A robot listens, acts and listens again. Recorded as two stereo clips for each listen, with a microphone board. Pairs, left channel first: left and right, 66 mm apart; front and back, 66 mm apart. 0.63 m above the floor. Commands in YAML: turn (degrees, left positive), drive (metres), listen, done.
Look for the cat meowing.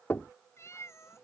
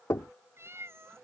turn: 135
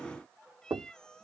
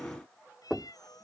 turn: 10
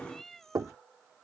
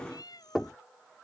done: "Found it: a cat meowing, straight ahead."